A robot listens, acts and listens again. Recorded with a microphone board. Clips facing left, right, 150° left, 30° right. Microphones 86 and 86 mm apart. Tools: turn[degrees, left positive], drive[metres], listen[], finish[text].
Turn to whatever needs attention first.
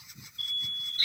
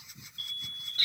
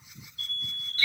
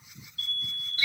Thought: The alarm: 60° right.
Action: turn[-60]
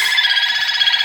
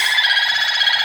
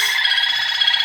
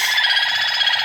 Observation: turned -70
Thought: Nothing new. It was at 10° left.
Action: turn[10]
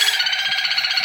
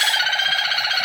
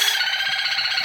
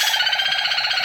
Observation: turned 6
Action: listen[]
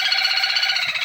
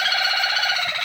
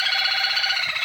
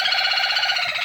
Action: finish[I heard an alarm from this way, but can't make it out now.]